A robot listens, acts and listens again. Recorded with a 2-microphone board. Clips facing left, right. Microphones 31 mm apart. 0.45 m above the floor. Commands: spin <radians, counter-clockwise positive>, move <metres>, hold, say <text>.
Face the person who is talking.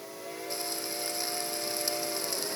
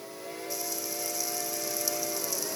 hold
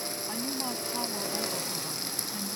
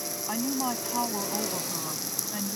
spin -0.44
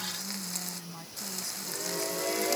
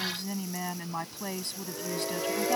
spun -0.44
spin -2.18
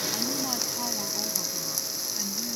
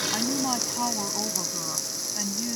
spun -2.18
spin -0.52
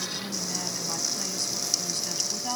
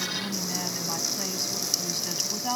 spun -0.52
spin -0.17
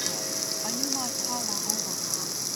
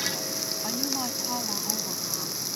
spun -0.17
say Facing the woman speaking.